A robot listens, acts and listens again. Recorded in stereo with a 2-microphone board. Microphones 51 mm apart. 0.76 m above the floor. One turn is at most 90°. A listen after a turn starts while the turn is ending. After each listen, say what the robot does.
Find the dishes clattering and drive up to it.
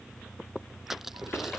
Keep listening.
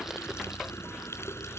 Keep listening.
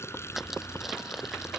I can't make out dishes clattering, only crushing and a running tap.